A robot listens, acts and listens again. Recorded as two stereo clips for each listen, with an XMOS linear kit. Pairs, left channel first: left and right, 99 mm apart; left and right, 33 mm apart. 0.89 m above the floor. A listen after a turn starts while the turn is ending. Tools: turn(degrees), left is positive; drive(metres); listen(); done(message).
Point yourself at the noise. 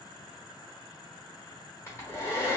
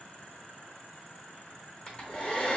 turn(degrees=25)
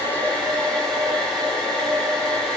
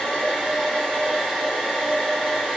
done("Found it: a hair dryer, straight ahead.")